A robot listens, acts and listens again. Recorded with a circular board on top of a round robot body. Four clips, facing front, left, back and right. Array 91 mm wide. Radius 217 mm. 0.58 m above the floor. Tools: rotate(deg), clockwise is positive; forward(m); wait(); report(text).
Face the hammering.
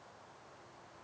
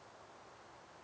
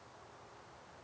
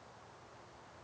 wait()
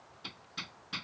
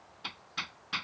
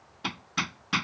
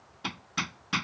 rotate(155)
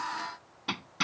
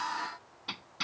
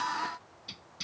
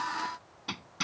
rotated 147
report("Facing the hammering.")